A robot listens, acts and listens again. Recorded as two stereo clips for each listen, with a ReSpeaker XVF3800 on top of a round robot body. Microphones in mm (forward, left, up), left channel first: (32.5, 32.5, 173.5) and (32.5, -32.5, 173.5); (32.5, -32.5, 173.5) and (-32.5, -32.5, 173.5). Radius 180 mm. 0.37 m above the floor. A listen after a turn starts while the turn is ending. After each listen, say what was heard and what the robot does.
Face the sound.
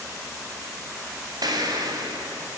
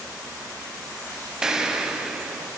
The explosion: 100° right. Turn 100° right.
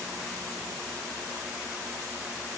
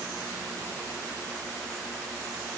Facing where the explosion came from. I can't hear it now.